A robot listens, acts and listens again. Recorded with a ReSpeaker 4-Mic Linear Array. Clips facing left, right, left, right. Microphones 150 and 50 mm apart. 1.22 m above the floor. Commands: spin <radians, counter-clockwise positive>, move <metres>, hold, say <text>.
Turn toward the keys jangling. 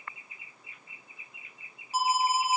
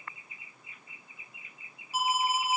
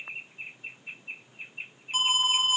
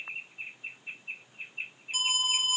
hold
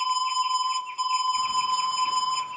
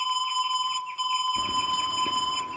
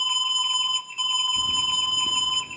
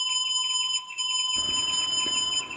spin -1.57
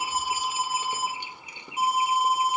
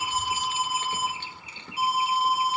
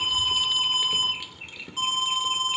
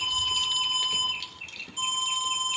spin 0.26
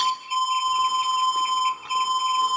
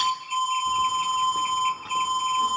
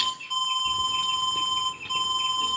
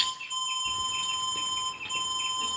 hold
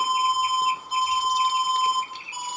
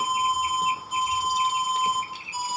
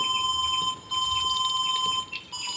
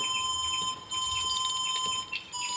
say Facing the keys jangling, 2 to 4 m away.